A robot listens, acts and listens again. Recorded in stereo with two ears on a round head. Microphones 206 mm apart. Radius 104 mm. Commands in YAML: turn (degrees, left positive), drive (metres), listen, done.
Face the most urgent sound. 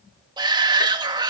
turn: -20
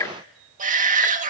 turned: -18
turn: -145
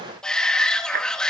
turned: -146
done: "Facing the shout, 1 to 2 m away."